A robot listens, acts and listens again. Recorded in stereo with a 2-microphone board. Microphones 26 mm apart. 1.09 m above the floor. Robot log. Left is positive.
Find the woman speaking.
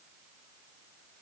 cmd idle
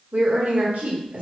note: The woman speaking: about 70° right or 110° right.
cmd yaw -70
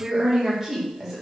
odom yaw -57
note: So it is at 10° right.
cmd yaw -10
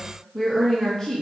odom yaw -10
note: The woman speaking is now 20° left.
cmd yaw +20
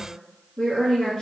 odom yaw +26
note: The woman speaking is now 10° left.
cmd yaw +10
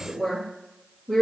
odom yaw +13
end: Facing the woman speaking.